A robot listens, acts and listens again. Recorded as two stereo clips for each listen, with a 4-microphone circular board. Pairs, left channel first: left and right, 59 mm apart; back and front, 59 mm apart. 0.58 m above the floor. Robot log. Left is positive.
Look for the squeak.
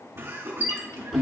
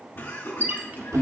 note: The squeak: 55° left.
cmd yaw +55
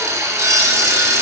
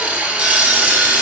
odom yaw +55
cmd idle
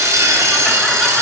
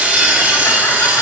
cmd idle
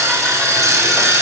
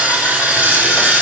end: I heard a squeak from this way, but can't make it out now.